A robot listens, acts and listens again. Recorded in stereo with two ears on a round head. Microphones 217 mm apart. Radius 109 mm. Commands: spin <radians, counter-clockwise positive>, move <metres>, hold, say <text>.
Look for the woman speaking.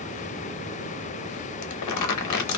hold
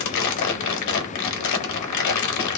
hold
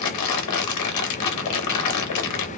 say I can't make out a woman speaking, only crumpling.